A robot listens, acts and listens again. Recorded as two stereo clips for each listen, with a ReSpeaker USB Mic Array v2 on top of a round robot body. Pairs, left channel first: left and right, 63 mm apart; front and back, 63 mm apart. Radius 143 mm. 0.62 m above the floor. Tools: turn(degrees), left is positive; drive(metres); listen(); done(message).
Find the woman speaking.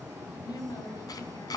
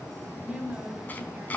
turn(degrees=110)
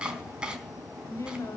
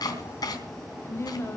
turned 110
turn(degrees=50)
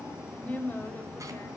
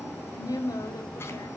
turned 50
turn(degrees=25)
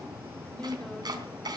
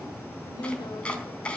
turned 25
turn(degrees=15)
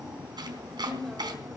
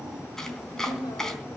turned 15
done("Facing the woman speaking, 2 to 4 m away.")